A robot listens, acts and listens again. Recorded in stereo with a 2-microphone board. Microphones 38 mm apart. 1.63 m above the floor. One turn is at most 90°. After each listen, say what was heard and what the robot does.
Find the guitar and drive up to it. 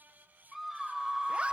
Keep listening.
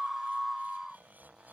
Keep listening.
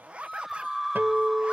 The guitar: about 70° right or 110° right. Turn 70° right.
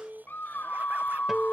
So it is at 10° right. Turn 10° right.
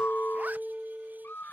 Drive 1.0 m forward.
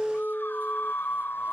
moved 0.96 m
Drive 1.0 m forward.
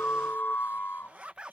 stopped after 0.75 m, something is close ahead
Keep listening.
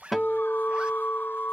Arrived at the guitar, straight ahead.